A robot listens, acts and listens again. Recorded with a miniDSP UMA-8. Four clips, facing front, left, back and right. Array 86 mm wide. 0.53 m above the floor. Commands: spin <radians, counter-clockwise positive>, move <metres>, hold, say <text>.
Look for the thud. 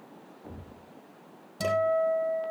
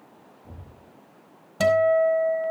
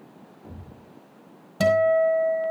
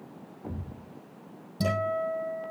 spin -1.40
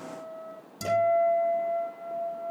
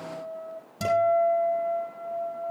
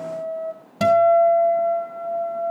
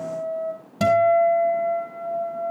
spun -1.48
say Facing where the thud came from. I can't hear it now.